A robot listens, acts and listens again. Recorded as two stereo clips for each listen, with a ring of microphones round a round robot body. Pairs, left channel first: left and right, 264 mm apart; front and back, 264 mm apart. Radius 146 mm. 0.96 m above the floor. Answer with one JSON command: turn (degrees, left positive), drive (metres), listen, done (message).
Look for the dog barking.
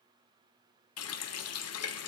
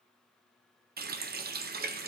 {"listen": true}
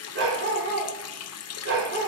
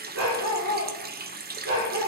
{"turn": -130}
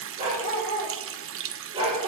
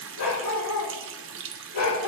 {"turn": -20}
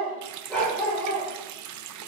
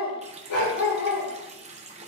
{"done": "Facing the dog barking."}